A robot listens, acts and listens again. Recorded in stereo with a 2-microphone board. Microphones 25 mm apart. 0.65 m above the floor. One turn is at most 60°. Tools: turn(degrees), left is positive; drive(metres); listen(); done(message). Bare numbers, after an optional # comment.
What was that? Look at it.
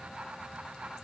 listen()
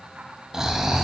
# The snoring: about 20° right or 160° right.
turn(-20)
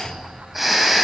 done("Facing the snoring, under 1 m away.")